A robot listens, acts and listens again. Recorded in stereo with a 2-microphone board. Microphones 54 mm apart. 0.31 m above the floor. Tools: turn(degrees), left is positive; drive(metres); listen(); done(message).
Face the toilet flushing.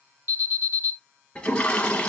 turn(degrees=20)
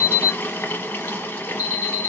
turn(degrees=140)
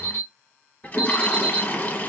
turn(degrees=35)
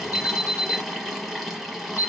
done("Facing the toilet flushing.")